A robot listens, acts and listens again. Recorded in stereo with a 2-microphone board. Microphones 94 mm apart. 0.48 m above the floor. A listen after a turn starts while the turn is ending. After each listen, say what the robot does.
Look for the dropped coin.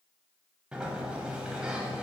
Keep listening.
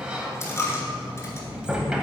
Turn 30° left.
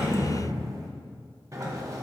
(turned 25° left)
Keep listening.
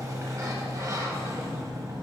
I heard a dropped coin, but can't make it out now. It was about 5° left or 125° left.